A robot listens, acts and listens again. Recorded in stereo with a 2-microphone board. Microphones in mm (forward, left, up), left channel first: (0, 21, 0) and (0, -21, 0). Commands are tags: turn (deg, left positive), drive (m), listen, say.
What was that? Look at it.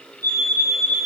<turn deg="65"/>
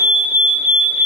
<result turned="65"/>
<turn deg="15"/>
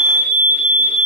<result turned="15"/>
<say>Found it: a fire alarm, straight ahead.</say>